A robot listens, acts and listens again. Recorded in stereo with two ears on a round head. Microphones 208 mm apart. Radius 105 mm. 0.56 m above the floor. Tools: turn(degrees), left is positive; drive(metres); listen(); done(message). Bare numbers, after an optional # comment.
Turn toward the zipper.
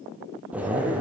turn(-30)
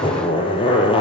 # So it is at 25° left.
turn(25)
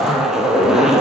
done("Facing the zipper, 2 to 4 m away.")